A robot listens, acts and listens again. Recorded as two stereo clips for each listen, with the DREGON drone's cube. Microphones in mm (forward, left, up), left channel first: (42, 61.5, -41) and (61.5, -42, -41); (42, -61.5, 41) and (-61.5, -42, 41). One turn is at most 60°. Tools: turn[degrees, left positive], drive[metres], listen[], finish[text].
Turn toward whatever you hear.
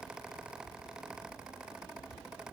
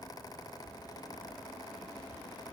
Action: listen[]
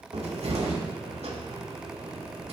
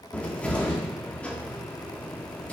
Thought: The cupboard door: 90° right.
Action: turn[-60]
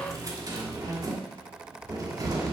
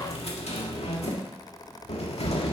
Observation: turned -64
Thought: The cupboard door is now 25° right.
Action: turn[-25]
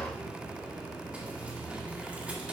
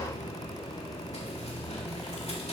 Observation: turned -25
Action: finish[Found it: a cupboard door, straight ahead, 1 to 2 m away.]